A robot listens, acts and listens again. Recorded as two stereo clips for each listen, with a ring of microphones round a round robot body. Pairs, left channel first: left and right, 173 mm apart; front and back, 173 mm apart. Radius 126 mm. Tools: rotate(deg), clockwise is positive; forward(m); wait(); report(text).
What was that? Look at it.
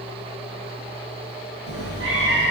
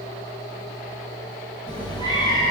rotate(105)
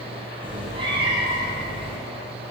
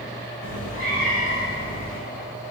rotate(30)
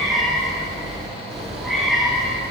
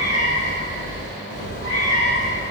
report("Found it: a cat meowing, straight ahead, over 4 m away.")